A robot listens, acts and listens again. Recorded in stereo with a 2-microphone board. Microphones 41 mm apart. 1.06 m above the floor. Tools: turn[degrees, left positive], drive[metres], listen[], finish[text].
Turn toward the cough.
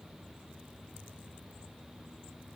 Action: listen[]
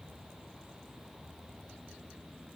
Action: listen[]
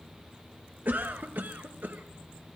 Thought: The cough: about 55° right or 125° right.
Action: turn[-55]
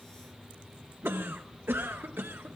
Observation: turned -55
Thought: So it is at 70° right.
Action: turn[-70]
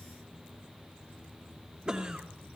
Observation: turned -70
Thought: The cough is now 20° right.
Action: turn[-20]
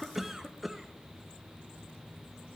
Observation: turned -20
Action: finish[Facing the cough, under 1 m away.]